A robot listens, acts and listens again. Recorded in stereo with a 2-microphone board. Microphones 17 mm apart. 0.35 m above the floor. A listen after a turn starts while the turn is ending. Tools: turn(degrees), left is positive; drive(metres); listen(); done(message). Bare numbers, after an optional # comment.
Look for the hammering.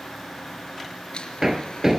turn(-30)
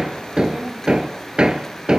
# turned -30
# So it is at 135° right.
turn(-135)
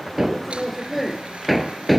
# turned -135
# The hammering is now 10° right.
turn(-10)
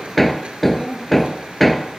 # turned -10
done("Facing the hammering.")